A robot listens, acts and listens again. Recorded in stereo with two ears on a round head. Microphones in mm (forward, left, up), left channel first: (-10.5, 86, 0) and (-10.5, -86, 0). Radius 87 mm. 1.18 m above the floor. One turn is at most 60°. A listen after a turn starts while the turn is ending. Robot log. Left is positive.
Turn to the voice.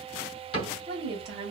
note: The woman speaking: about 55° right or 125° right.
cmd yaw -55
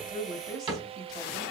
end: Found it: a woman speaking, straight ahead.